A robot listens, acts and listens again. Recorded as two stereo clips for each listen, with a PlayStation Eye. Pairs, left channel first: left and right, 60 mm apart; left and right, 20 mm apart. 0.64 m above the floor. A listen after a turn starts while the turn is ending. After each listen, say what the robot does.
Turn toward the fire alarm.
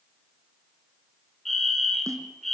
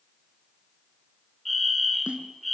Turn 30° left.
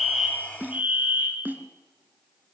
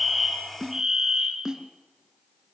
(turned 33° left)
Turn 25° right.
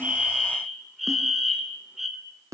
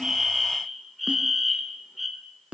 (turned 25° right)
Facing the fire alarm, 2 to 4 m away.